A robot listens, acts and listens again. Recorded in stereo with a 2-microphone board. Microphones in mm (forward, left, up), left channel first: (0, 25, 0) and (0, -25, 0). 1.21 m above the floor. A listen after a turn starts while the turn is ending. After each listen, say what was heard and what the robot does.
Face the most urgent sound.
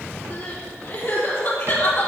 The crying: about 50° left or 130° left. Turn 50° left.
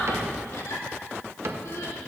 So it is at 80° left. Turn 80° left.
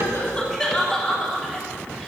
Facing the crying.